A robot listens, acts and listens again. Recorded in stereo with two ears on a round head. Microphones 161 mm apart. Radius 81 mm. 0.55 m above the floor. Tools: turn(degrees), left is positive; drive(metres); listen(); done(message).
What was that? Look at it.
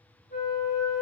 turn(degrees=50)
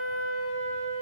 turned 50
turn(degrees=80)
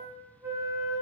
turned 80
turn(degrees=-15)
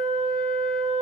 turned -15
done("Found it: a flute, straight ahead, 1 to 2 m away.")